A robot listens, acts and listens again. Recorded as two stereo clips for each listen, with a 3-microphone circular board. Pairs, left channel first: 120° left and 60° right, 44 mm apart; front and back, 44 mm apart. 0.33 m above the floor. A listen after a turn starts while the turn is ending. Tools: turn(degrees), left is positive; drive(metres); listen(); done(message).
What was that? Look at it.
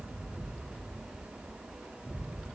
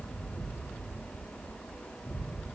listen()
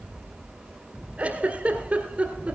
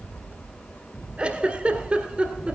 turn(degrees=-120)
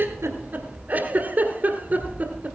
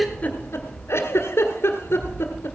turn(degrees=-10)
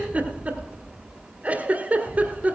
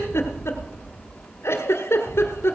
done("Facing the giggle, 1 to 2 m away.")